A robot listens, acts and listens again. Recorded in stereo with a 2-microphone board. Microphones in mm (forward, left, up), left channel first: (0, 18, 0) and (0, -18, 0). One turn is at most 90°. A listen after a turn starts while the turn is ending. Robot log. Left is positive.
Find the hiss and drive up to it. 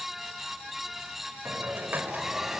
note: The hiss: about 65° right or 115° right.
cmd yaw -65
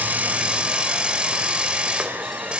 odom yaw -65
note: So it is at 35° right.
cmd yaw -35
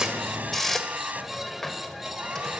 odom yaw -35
note: The hiss is now 10° left.
cmd yaw +10
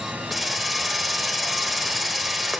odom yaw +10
cmd fwd 1.0
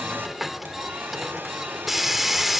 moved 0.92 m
cmd fwd 1.0
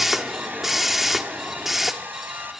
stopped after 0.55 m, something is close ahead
end: I am next to the hiss.